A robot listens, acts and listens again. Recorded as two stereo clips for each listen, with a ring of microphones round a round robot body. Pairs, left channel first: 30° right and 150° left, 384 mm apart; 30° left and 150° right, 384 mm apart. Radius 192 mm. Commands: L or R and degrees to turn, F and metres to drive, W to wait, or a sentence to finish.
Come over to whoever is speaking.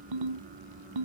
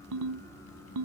W
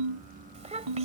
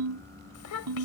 L75
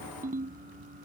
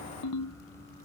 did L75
W
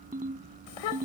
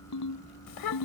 F1.0
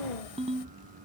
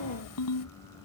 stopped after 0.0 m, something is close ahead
R10
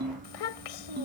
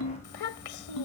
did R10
Something is in my way. I am facing the child speaking but have not reached it.